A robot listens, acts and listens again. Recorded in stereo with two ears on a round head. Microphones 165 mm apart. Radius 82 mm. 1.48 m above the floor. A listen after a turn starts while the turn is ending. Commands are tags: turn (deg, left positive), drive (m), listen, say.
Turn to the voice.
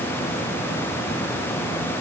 <listen/>
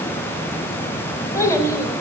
<turn deg="15"/>
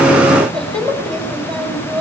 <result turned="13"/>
<say>Facing the child speaking, over 4 m away.</say>